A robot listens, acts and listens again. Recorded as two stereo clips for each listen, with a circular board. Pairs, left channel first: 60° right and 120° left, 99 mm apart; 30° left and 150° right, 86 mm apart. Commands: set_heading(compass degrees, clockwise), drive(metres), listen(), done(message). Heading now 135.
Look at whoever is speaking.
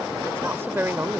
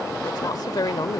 set_heading(75)
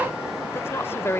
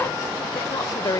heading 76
done("Facing the woman speaking.")